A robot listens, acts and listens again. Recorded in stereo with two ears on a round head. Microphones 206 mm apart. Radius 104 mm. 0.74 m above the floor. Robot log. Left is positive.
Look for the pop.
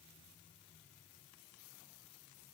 cmd idle
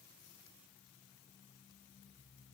cmd idle
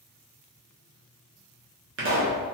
note: The pop: about 55° right or 125° right.
cmd yaw -55
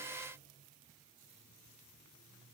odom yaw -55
cmd idle
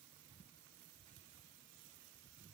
end: I heard a pop, but can't make it out now. It was about straight ahead or 70° right.